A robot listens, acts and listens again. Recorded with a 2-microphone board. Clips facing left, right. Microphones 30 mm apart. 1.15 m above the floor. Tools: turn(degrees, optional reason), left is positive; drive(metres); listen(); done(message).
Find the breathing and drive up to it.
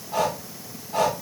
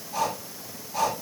turn(degrees=75, reason="The breathing: about 75° left or 105° left.")
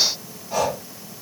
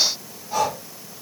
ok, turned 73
drive(metres=1.0)
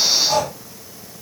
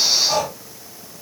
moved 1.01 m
drive(metres=1.0)
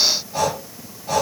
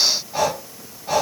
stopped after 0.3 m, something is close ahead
turn(degrees=-10, reason="The breathing is now 10° right.")
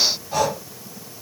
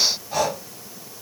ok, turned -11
done("Arrived at the breathing, straight ahead.")